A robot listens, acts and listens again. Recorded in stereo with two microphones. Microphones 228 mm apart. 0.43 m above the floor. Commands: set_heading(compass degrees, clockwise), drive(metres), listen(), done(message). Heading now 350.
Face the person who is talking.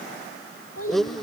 set_heading(260)
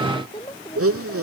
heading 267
set_heading(247)
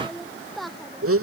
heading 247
done("Facing the child speaking.")